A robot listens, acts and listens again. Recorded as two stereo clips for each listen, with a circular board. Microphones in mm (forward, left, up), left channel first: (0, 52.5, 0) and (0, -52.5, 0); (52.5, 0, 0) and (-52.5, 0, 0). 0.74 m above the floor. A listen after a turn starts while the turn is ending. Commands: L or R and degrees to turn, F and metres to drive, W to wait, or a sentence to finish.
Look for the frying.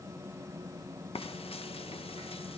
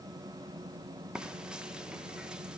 L100
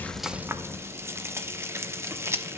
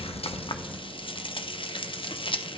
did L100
R25
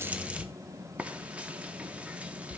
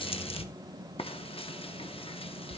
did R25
R10
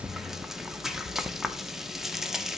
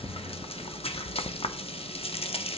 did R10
Found it: frying, straight ahead, under 1 m away.